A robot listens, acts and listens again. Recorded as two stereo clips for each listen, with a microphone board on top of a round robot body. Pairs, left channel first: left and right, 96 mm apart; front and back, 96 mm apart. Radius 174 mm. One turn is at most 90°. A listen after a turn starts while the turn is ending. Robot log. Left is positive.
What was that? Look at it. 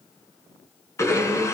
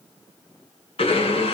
note: The blender: 30° left.
cmd yaw +30
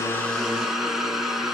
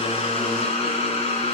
end: Found it: a blender, straight ahead, over 4 m away.